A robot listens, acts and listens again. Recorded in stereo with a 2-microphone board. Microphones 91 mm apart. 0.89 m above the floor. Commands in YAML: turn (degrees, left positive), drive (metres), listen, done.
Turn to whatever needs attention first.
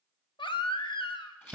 turn: 65
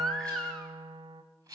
done: "Found it: a baby crying, straight ahead."